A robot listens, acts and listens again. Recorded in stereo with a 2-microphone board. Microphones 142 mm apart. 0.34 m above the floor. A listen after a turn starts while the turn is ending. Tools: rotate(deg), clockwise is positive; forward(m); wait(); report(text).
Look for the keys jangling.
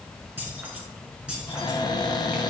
rotate(30)
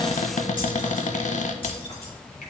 rotate(-40)
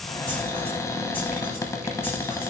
wait()
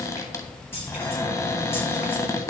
rotate(-15)
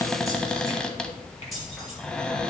report("Found it: keys jangling, straight ahead, over 4 m away.")